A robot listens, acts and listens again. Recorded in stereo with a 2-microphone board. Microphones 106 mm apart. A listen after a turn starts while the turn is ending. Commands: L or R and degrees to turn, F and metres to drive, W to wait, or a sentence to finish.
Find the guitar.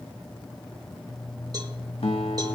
L65
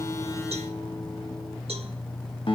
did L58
L55
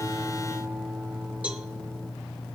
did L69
R15
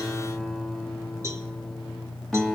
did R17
Facing the guitar, 1 to 2 m away.